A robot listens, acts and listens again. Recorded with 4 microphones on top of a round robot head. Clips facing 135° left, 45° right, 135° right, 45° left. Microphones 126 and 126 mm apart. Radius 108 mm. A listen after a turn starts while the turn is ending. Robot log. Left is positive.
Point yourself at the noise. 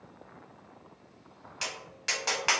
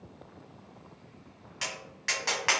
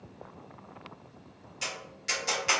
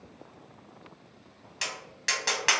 note: The tapping: 65° left.
cmd yaw +65
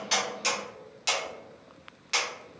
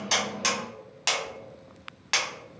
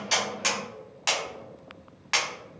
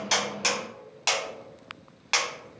note: The tapping is now 20° right.
cmd yaw -20
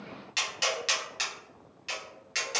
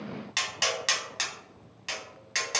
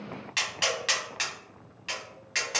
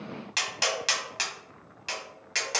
end: Facing the tapping, 1 to 2 m away.